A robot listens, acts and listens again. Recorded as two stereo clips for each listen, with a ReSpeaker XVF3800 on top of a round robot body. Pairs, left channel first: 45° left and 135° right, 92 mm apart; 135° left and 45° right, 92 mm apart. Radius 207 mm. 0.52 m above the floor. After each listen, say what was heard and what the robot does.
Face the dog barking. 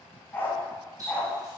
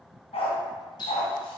The dog barking: 125° left. Turn 125° left.
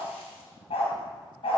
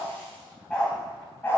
The dog barking is now 70° left. Turn 70° left.
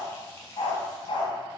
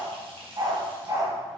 The dog barking is now 10° left. Turn 10° left.
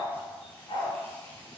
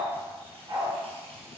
The dog barking is now 10° left. Turn 10° left.
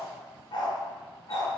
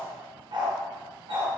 Facing the dog barking, 2 to 4 m away.